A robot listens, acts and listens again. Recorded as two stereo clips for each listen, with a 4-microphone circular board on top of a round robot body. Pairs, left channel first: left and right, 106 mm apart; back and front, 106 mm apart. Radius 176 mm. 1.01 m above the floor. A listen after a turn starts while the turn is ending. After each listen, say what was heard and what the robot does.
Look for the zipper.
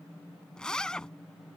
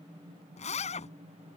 The zipper: 175° left. Turn 175° left.
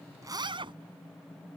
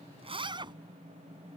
The zipper is now 45° right. Turn 45° right.
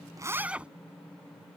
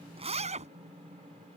The zipper is now 10° right. Turn 10° right.
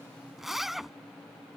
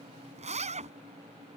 Found it: a zipper, straight ahead.